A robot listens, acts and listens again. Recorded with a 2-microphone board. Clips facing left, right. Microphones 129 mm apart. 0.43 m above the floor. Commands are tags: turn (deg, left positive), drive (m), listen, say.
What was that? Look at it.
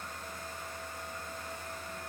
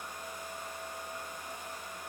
<listen/>
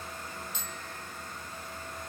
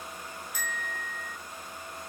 <turn deg="25"/>
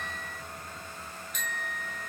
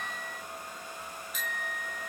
<say>Found it: a bicycle bell, straight ahead.</say>